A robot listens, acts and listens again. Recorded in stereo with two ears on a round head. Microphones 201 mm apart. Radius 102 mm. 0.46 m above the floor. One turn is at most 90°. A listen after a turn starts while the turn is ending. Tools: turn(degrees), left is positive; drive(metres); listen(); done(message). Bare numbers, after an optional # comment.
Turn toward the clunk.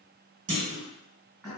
# The clunk: about 35° right or 145° right.
turn(-35)
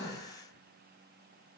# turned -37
listen()
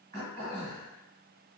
done("I heard a clunk, but can't make it out now. It was about straight ahead or 110° right.")